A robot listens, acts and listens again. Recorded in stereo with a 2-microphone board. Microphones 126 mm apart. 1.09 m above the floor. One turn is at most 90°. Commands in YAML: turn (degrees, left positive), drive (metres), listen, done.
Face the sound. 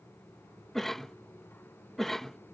turn: 30
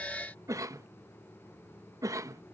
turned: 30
turn: -25
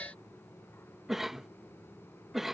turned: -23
done: "Facing the cough."